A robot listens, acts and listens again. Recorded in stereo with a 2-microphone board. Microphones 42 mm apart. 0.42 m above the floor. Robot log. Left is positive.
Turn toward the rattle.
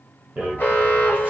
note: The rattle: about 35° right or 145° right.
cmd yaw -35
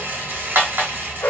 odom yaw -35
note: So it is at 100° right.
cmd yaw -100
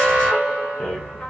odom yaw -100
note: The rattle is now 25° left.
cmd yaw +25
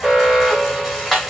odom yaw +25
end: Facing the rattle, 1 to 2 m away.